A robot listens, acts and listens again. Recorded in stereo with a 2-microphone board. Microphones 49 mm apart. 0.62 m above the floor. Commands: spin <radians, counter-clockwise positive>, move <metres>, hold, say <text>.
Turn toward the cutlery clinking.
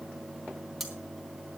spin 0.52
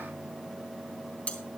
spin 2.62
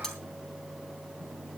hold
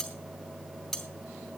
say Facing the cutlery clinking, 2 to 4 m away.